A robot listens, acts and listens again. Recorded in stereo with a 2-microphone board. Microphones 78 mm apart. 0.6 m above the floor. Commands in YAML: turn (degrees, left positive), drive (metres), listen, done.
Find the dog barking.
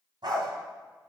turn: -70
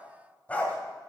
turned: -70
turn: 20
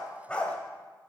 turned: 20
turn: 15
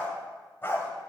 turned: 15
turn: 30
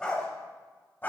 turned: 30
turn: 25
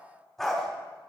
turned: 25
done: "Found it: a dog barking, straight ahead, 1 to 2 m away."